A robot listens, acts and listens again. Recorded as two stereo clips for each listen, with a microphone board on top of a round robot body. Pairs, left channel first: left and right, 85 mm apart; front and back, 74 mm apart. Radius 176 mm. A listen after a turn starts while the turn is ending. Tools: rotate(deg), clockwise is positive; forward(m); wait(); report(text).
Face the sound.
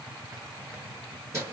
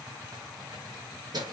rotate(150)
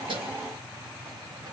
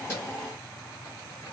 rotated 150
wait()
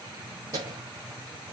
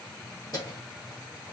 rotate(40)
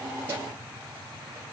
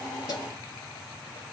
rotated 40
wait()
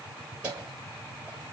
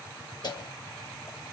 rotate(15)
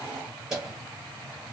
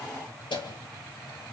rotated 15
report("Found it: keys jangling, straight ahead.")